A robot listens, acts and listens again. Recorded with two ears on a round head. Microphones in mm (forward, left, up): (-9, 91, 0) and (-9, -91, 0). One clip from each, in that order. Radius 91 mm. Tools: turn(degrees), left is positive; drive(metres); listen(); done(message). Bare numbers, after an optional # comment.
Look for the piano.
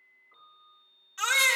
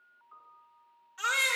# The piano: about 70° right or 110° right.
turn(-70)
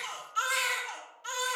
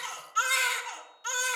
listen()
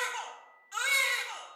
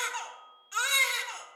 listen()
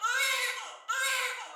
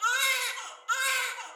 done("I heard a piano, but can't make it out now. It was about straight ahead or 40° right.")